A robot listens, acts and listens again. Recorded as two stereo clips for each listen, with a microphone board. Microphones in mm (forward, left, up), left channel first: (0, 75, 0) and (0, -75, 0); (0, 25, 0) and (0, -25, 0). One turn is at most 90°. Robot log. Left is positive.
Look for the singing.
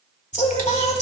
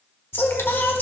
note: The singing: about 50° left or 130° left.
cmd yaw +50
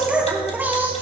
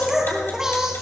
note: So it is at 15° right.
cmd yaw -15
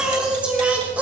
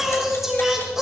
note: The singing is now 10° right.
cmd yaw -10
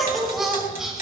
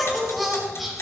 end: Facing the singing, 2 to 4 m away.